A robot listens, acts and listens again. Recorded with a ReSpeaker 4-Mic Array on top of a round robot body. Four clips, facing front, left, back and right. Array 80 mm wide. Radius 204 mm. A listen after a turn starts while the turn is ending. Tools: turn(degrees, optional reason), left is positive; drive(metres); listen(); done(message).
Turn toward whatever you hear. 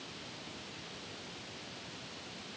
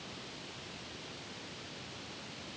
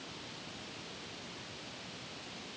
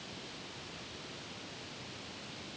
listen()
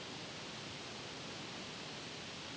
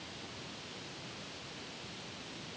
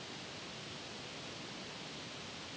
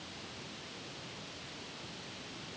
listen()
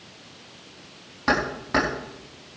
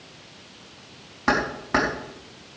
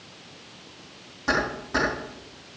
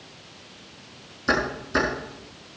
turn(degrees=70, reason="The keys jangling: 70° left.")
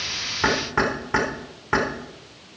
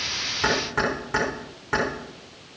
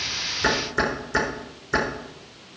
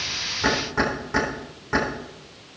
done("Found it: keys jangling, straight ahead.")